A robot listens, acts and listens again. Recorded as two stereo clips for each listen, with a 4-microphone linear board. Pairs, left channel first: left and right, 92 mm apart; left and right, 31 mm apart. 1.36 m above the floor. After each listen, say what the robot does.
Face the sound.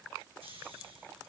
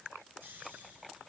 Turn 90° right.
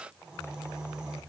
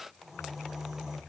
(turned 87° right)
Turn 10° right.
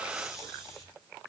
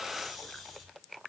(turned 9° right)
Facing the snoring.